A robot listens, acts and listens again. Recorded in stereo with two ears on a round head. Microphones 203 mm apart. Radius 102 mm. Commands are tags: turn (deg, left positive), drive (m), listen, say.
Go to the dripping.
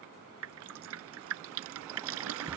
<turn deg="-75"/>
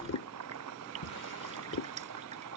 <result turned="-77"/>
<turn deg="-30"/>
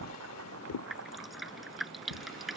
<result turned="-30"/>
<drive m="1.0"/>
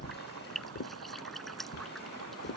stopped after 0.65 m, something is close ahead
<say>Blocked. The dripping is further on, straight ahead.</say>